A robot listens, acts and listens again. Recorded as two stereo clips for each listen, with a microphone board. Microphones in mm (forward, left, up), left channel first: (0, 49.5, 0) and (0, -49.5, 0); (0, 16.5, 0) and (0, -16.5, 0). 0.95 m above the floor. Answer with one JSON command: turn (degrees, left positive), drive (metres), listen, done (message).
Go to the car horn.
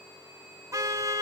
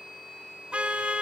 {"turn": -30}
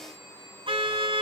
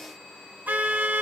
{"turn": -120}
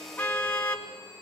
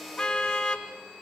{"turn": 15}
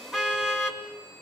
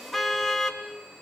{"drive": 1.0}
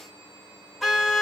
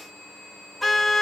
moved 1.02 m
{"drive": 1.0}
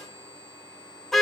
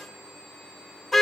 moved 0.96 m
{"drive": 1.0}
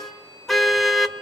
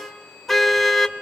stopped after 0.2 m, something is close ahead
{"done": "Arrived at the car horn, straight ahead."}